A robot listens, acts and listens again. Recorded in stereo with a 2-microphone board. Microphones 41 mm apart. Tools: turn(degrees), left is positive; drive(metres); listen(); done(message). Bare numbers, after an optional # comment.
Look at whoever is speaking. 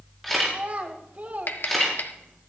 # The child speaking: about 40° right or 140° right.
turn(-40)
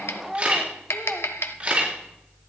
done("Found it: a child speaking, straight ahead.")